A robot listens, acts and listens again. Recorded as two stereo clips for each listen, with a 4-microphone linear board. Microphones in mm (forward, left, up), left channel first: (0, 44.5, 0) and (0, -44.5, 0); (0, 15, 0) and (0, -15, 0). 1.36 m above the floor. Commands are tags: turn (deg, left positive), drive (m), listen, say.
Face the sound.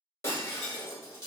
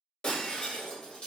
<turn deg="30"/>
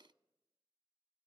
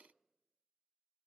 <listen/>
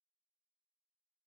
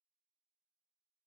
<say>I heard breaking glass, but can't make it out now. It was about straight ahead or 120° left.</say>